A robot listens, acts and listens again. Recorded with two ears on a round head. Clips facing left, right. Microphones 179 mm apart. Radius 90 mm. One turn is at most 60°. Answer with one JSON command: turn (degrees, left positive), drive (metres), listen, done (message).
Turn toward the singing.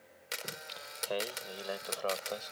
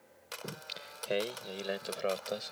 {"turn": -25}
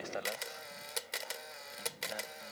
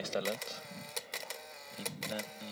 {"turn": -60}
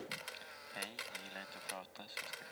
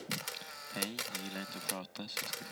{"turn": -50}
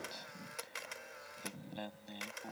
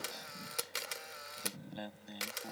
{"done": "Facing the singing."}